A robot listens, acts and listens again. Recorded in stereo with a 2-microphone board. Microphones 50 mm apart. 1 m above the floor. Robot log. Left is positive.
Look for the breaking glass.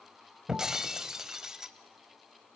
cmd yaw -30
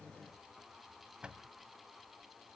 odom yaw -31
cmd idle
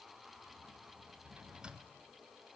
end: I heard breaking glass, but can't make it out now. It was about 20° left or 140° right.